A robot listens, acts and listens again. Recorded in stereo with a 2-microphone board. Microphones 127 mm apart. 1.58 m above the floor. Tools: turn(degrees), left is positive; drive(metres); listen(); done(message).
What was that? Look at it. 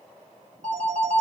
turn(degrees=-60)
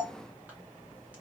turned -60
listen()
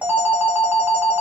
turn(degrees=-15)
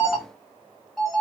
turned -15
done("Found it: a phone ringing, straight ahead, 1 to 2 m away.")